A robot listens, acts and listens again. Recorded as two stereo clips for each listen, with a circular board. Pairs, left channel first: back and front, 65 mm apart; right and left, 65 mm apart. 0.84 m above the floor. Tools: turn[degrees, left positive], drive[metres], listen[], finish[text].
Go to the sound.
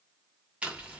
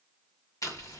Thought: The chewing: 70° right.
Action: turn[-70]
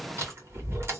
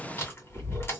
Thought: The chewing is now 40° right.
Action: turn[-40]
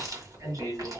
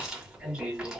Thought: The chewing is now 15° left.
Action: turn[15]
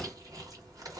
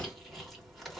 Action: drive[1.0]
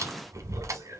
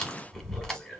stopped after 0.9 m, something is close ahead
Thought: The chewing is now 10° right.
Action: turn[-10]
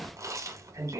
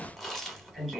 Action: finish[I am next to the chewing.]